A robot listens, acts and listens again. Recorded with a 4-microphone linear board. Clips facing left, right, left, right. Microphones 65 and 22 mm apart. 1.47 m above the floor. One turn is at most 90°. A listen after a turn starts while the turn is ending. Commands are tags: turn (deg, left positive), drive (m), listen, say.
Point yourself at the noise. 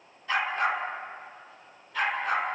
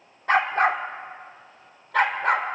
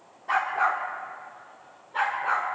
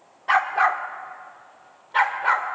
<turn deg="-70"/>
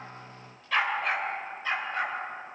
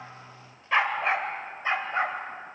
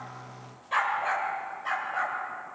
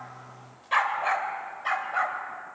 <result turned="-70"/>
<turn deg="-30"/>
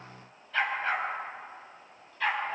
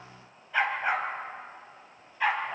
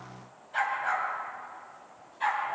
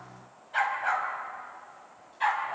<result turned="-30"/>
<turn deg="-20"/>
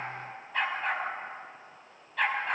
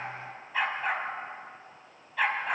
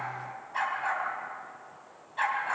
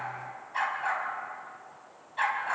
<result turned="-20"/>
<say>Found it: a dog barking, straight ahead, over 4 m away.</say>